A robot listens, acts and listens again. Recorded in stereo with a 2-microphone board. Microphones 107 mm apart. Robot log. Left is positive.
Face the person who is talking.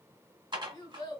note: The child speaking: about 45° left or 135° left.
cmd yaw +45
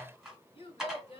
note: So it is at 80° left.
cmd yaw +80
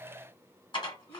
cmd idle
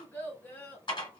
note: The child speaking is now 20° left.
cmd yaw +20
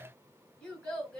note: The child speaking is now 10° left.
cmd yaw +10
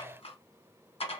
cmd idle
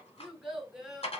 end: Found it: a child speaking, straight ahead, 1 to 2 m away.